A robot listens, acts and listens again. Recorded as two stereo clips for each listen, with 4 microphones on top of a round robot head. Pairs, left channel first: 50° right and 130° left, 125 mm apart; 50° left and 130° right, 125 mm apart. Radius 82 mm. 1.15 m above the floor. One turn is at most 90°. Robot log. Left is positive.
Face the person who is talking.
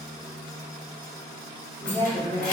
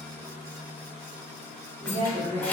note: The woman speaking: 120° right.
cmd yaw -90
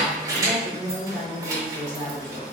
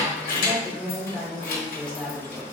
note: The woman speaking is now 30° right.
cmd yaw -30
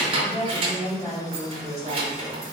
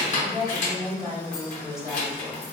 note: The woman speaking is now 15° right.
cmd yaw -15
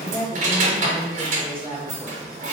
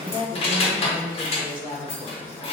end: Facing the woman speaking.